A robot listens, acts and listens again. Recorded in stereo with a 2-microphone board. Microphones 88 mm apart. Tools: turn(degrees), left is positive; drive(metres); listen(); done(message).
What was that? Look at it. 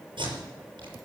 turn(degrees=-70)
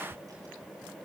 listen()
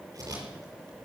turn(degrees=-40)
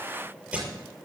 turn(degrees=-10)
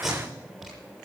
done("Found it: tape being pulled, straight ahead, over 4 m away.")